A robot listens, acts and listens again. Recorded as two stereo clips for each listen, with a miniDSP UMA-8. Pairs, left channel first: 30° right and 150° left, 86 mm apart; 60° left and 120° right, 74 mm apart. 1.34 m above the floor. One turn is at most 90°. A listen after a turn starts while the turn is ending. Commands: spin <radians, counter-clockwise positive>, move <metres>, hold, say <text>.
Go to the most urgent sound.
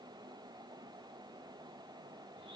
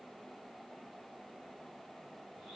hold
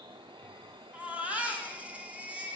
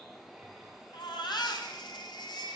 spin 1.31
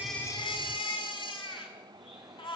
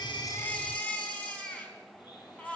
spin -0.26
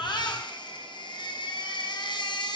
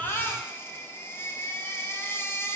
move 1.0
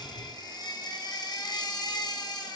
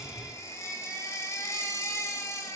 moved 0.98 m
spin 0.17
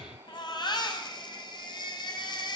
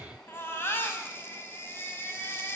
move 1.0
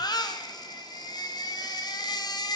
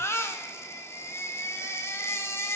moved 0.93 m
move 1.0
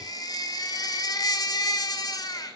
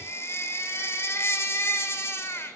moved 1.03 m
move 1.0
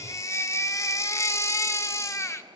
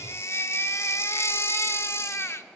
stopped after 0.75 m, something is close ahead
spin 0.26
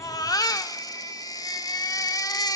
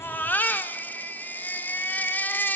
say I am next to the baby crying.